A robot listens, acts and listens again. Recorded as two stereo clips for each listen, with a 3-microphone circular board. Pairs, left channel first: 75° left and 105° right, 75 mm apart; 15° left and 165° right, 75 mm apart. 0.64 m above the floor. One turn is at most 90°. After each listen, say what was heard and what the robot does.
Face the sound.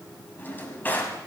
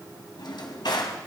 The drawer: 10° left. Turn 10° left.
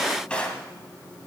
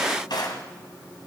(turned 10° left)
Found it: a drawer, straight ahead, 1 to 2 m away.